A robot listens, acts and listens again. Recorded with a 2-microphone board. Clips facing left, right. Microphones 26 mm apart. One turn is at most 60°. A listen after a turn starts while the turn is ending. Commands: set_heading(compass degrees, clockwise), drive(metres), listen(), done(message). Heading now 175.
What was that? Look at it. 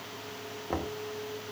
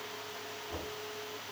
set_heading(120)
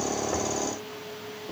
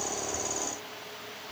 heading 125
set_heading(65)
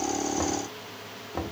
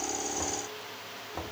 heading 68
set_heading(53)
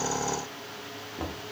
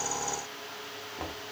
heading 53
done("Found it: knocking, straight ahead, 1 to 2 m away.")